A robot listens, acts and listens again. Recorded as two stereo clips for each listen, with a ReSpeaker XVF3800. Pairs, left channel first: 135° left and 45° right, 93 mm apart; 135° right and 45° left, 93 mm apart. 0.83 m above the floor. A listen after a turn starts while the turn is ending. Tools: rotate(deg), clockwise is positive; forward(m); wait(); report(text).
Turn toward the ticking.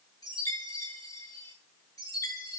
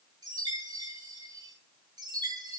wait()
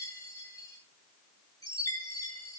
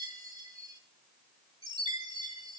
wait()
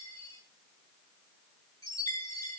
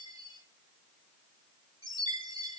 report("I can't make out ticking, only a chime.")